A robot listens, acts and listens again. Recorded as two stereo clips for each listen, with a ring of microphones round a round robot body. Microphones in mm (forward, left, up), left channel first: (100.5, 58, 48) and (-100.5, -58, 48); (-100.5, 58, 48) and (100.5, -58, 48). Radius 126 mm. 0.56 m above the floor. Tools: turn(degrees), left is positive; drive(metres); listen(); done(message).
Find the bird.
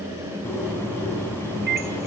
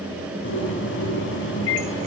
turn(degrees=110)
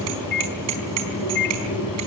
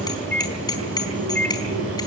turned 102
turn(degrees=10)
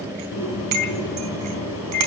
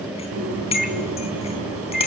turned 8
done("Facing the bird, over 4 m away.")